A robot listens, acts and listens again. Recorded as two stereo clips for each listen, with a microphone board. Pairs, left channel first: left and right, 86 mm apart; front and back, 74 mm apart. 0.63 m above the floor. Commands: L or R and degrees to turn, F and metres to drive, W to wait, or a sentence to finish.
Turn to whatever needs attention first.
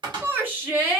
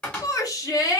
R30
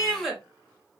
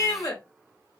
Facing the shout, 1 to 2 m away.